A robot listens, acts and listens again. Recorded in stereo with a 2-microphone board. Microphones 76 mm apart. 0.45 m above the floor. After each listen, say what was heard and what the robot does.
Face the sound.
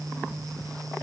Keep listening.
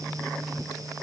Keep listening.
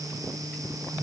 I can't make out anything to turn to.